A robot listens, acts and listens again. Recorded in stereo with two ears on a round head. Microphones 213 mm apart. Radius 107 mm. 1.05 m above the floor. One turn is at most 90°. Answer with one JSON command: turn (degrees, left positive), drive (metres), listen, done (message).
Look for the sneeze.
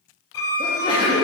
{"turn": 20}
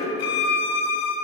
{"listen": true}
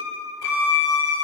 {"done": "I heard a sneeze, but can't make it out now. It was about straight ahead or 140° left."}